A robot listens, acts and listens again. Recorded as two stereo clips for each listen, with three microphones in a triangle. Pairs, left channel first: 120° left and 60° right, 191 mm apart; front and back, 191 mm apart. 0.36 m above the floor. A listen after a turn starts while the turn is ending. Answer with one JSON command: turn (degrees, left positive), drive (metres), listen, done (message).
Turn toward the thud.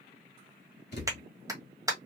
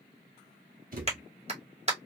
{"turn": 140}
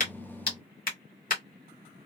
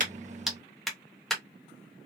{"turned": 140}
{"done": "I heard a thud from this way, but can't make it out now."}